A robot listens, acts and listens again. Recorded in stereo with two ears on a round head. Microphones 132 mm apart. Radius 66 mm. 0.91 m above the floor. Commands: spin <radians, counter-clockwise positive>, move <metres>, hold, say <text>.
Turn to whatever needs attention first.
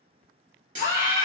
spin -1.22
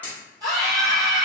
spin -0.44
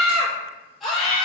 say Facing the scream.